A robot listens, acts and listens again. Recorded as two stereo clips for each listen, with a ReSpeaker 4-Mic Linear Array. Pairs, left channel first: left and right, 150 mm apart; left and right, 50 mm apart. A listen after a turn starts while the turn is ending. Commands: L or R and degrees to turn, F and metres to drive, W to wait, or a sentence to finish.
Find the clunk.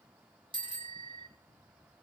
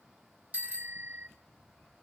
W
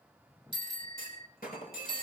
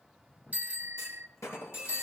L90
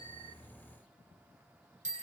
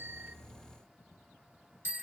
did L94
I heard a clunk from this way, but can't make it out now.